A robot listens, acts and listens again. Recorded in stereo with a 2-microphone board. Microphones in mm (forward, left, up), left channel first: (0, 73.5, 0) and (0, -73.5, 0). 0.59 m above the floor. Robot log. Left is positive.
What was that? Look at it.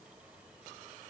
cmd idle
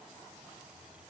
cmd idle
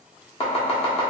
note: The chopping: about 45° left or 135° left.
cmd yaw +45
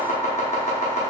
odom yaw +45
note: So it is at 80° left.
cmd yaw +80
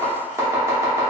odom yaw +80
note: The chopping is now 20° right.
cmd yaw -20
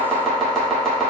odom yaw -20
end: Facing the chopping.